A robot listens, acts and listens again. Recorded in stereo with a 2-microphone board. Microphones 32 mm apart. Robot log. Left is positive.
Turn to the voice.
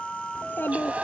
note: The child speaking: about 70° left or 110° left.
cmd yaw +70
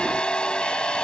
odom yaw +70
cmd idle
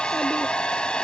cmd idle
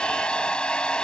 end: I heard a child speaking, but can't make it out now. It was about straight ahead or 40° left.